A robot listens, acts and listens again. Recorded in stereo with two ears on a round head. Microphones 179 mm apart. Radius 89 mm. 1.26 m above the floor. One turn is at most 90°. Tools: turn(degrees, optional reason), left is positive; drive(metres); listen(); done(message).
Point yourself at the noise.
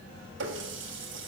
turn(degrees=-65, reason="The running tap: about 65° right or 115° right.")
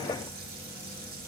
listen()
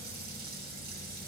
listen()
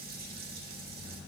done("I heard a running tap, but can't make it out now. It was about straight ahead or 50° right.")